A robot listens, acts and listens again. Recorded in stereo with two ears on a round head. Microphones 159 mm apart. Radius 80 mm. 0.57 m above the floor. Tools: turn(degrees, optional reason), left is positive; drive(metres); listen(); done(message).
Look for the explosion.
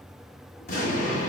turn(degrees=55, reason="The explosion: about 55° left or 125° left.")
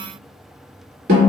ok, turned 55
listen()
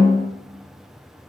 done("I heard an explosion, but can't make it out now. It was about straight ahead or 70° left.")